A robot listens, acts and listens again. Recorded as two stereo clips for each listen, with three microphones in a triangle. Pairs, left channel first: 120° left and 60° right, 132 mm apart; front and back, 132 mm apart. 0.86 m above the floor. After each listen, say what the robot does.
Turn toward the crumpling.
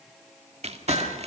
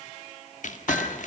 Turn 20° right.
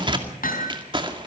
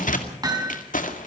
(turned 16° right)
Facing the crumpling, 2 to 4 m away.